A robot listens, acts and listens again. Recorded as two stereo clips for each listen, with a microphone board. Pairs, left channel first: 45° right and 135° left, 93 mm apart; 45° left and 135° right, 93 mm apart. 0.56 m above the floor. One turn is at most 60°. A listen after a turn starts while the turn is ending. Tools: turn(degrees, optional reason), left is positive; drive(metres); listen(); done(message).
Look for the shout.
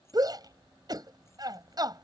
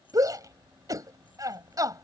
turn(degrees=60, reason="The shout: 175° left.")
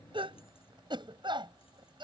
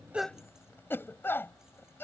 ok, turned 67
turn(degrees=60, reason="The shout is now 110° left.")
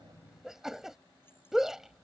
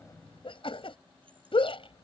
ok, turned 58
turn(degrees=50, reason="The shout is now 50° left.")
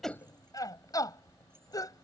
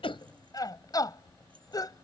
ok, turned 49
done("Facing the shout.")